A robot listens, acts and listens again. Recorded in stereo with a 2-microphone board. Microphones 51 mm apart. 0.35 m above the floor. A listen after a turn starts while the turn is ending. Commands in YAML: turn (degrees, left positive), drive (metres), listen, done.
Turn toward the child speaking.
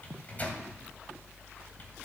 listen: true
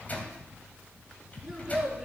turn: -30
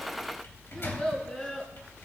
turn: 20
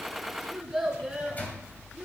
done: "Found it: a child speaking, straight ahead, 2 to 4 m away."